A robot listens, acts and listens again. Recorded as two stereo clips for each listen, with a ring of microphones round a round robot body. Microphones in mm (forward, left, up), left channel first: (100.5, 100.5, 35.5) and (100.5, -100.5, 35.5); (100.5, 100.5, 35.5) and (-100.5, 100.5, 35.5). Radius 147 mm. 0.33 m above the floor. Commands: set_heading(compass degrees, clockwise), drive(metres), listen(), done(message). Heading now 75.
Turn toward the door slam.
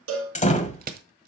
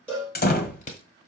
set_heading(40)
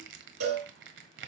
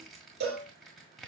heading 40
done("Facing where the door slam came from. I can't hear it now.")